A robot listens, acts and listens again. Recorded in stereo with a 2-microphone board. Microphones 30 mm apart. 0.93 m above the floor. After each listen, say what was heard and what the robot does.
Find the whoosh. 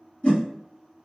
The whoosh: about 55° left or 125° left. Turn 55° left.
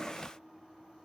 Keep listening.
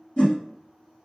So it is at 45° left. Turn 45° left.
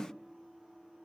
Keep listening.
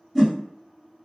Found it: a whoosh, straight ahead.